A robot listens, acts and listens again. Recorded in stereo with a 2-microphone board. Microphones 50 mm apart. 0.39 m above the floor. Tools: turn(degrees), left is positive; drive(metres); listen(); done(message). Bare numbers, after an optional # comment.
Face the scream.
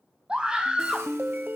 # The scream: about 20° right or 160° right.
turn(-20)
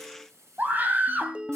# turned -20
# So it is at 140° right.
turn(-140)
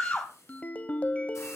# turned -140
# The scream is now 35° left.
turn(35)
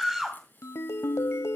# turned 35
# The scream is now 10° right.
turn(-10)
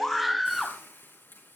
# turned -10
done("Found it: a scream, straight ahead.")